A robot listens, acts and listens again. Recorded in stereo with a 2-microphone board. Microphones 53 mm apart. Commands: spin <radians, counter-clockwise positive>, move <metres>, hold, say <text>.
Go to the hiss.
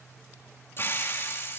spin 0.79
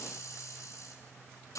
spin 1.57
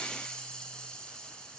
spin 0.26
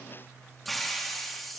move 1.0
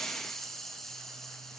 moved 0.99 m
move 1.0
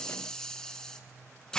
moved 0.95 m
spin 0.26
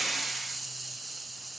move 1.0
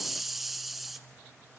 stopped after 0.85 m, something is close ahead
say Arrived at the hiss, straight ahead.